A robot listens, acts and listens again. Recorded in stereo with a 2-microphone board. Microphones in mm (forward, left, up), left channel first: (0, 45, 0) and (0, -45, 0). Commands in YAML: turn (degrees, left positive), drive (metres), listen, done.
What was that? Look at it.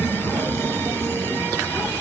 listen: true
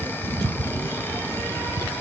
listen: true
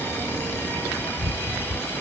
done: "I can't make out anything to turn to."